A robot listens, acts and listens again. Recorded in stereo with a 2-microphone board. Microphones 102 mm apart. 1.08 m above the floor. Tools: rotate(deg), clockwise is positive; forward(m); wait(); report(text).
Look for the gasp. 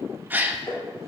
rotate(15)
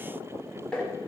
wait()
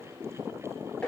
report("I heard a gasp, but can't make it out now. It was about straight ahead or 150° right.")